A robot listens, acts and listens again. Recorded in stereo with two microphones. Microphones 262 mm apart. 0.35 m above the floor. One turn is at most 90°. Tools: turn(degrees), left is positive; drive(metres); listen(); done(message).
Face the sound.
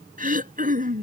turn(degrees=-30)
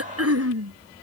turn(degrees=-90)
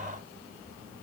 turn(degrees=-25)
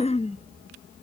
turn(degrees=25)
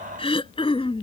turn(degrees=20)
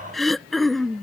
done("Facing the throat clearing.")